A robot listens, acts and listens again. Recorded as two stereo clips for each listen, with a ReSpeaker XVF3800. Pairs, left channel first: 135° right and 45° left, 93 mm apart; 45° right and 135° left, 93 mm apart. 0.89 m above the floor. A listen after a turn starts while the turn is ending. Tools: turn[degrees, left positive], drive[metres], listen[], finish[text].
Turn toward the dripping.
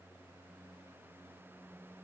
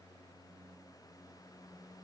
Action: listen[]
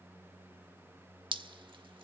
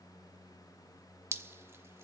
Thought: The dripping: 70° left.
Action: turn[70]
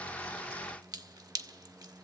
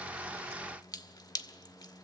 Action: finish[Found it: dripping, straight ahead.]